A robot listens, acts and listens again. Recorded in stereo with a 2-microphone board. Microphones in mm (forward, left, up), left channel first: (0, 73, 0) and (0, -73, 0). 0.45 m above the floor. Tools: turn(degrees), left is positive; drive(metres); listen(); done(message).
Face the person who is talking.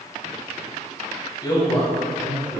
turn(degrees=30)
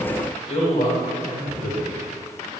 turn(degrees=120)
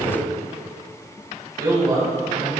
turn(degrees=-25)
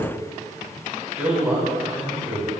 turn(degrees=-10)
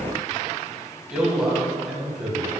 done("Found it: a man speaking, straight ahead, 2 to 4 m away.")